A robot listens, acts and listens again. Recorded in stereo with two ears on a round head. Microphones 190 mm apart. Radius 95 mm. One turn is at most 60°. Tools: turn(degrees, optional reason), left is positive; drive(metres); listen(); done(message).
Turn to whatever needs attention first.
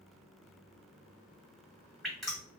listen()
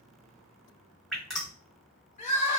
turn(degrees=35, reason="The crying: about 35° left or 145° left.")
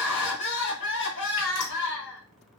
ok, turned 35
turn(degrees=60, reason="So it is at 110° left.")
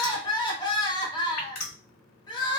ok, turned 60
turn(degrees=25, reason="The crying is now 25° left.")
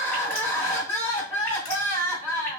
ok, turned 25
turn(degrees=10, reason="The crying is now 10° left.")
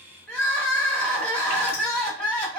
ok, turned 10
done("Facing the crying.")